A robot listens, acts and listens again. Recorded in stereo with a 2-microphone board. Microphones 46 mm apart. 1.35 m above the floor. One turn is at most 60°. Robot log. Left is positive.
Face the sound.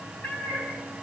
note: The cat meowing: about 35° left or 145° left.
cmd yaw +35
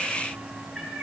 end: Facing the cat meowing, over 4 m away.